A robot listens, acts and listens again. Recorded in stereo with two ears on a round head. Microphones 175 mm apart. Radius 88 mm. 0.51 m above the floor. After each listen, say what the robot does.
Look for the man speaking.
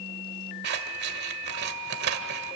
Keep listening.
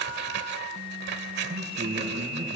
Turn 30° right.
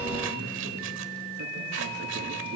Turn 120° right.
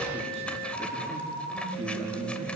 Turn 30° right.
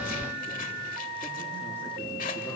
Keep listening.
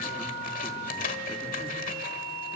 Keep listening.
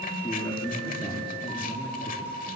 Turn 10° left.
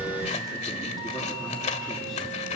Keep listening.
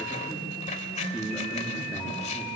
Found it: a man speaking, straight ahead, over 4 m away.